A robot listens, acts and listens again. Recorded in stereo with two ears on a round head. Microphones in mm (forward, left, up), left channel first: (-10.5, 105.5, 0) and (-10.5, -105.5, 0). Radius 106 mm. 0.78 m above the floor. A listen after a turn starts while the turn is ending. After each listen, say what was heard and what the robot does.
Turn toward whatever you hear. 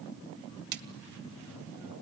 The splash: about 50° right or 130° right. Turn 50° right.
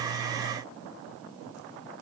Keep listening.
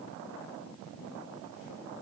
I heard a splash, but can't make it out now. It was about straight ahead or 80° right.